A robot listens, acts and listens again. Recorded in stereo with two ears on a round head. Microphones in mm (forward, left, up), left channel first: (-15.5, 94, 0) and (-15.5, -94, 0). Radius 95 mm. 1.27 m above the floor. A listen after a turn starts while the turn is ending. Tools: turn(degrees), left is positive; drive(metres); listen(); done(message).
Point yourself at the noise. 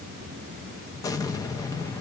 turn(degrees=15)
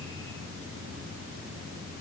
listen()
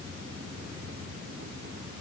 done("I heard an explosion, but can't make it out now. It was about straight ahead or 150° left.")